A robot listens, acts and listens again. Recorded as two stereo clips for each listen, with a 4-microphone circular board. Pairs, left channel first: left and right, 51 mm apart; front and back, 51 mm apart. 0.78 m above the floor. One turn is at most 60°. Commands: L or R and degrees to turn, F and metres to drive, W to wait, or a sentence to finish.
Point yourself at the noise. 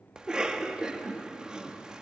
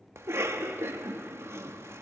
R60
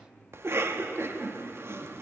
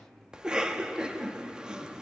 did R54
R60
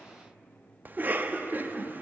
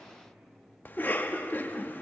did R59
R45
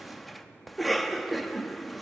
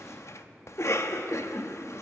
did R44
Found it: a cough, straight ahead.